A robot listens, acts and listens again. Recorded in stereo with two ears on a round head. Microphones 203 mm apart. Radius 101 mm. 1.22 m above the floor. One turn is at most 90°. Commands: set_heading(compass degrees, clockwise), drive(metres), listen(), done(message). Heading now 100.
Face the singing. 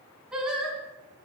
set_heading(130)
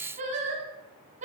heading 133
set_heading(223)
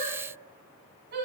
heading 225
set_heading(275)
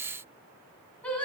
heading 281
done("Facing the singing.")